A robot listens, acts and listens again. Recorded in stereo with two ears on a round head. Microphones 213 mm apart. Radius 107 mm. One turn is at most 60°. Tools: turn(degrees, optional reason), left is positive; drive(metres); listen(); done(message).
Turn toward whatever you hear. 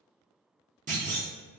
turn(degrees=-35, reason="The clunk: about 35° right or 145° right.")
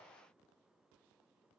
listen()
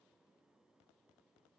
done("I heard a clunk, but can't make it out now. It was about straight ahead or 110° right.")